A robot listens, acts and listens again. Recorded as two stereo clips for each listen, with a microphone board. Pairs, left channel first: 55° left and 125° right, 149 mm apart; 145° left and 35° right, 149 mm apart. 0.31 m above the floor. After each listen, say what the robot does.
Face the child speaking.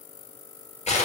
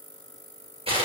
Keep listening.
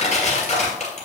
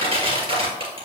Keep listening.
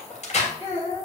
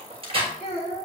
Turn 100° left.
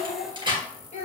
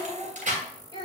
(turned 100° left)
Turn 20° left.
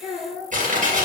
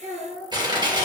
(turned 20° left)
Turn 10° right.
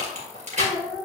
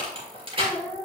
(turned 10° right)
Facing the child speaking, over 4 m away.